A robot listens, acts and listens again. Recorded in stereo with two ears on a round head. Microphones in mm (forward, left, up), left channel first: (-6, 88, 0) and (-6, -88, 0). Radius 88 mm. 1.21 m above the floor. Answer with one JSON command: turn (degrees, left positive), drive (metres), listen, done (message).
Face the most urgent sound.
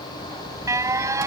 {"turn": -15}
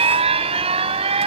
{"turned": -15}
{"turn": -150}
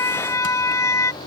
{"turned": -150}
{"turn": 15}
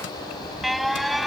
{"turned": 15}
{"done": "Facing the alarm."}